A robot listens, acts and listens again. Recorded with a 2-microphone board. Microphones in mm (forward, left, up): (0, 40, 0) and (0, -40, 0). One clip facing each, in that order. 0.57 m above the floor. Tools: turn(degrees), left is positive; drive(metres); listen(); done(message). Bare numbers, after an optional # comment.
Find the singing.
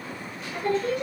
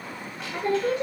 # The singing: about 30° right or 150° right.
turn(-30)
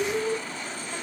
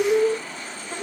# So it is at 120° right.
turn(-120)
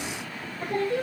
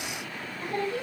# The singing is now 45° left.
turn(45)
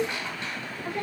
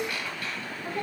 done("Found it: singing, straight ahead, 2 to 4 m away.")